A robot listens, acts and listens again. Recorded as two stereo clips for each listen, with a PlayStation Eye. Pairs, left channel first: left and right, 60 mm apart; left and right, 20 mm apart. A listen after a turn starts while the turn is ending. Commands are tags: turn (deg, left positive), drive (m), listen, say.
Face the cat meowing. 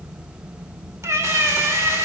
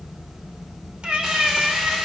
<turn deg="-55"/>
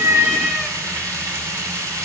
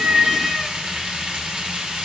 <turn deg="-15"/>
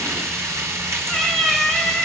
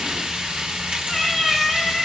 <say>Facing the cat meowing, 1 to 2 m away.</say>